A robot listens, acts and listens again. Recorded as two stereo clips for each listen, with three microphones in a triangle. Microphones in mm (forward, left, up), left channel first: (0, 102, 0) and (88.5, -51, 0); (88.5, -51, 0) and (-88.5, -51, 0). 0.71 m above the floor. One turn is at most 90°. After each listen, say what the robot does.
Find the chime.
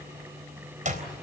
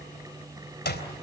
Keep listening.
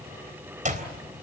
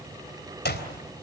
Keep listening.
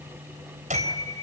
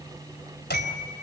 Turn 90° right.
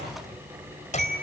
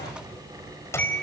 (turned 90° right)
Turn 80° right.
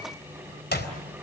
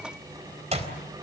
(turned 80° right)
Keep listening.
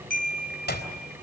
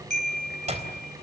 Turn 25° right.
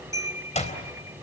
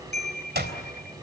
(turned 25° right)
Turn 15° left.
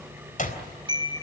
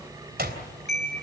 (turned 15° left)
Found it: a chime, straight ahead.